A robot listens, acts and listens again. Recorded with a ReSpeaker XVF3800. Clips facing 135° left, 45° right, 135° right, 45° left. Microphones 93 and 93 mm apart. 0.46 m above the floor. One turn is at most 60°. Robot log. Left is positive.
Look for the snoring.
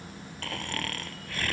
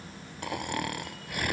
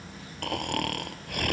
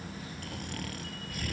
note: The snoring: 115° right.
cmd yaw -60
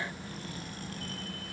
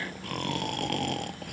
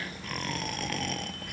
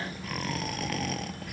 note: The snoring is now 45° right.
cmd yaw -45
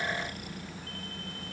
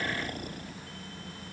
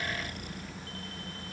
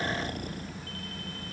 end: Facing the snoring.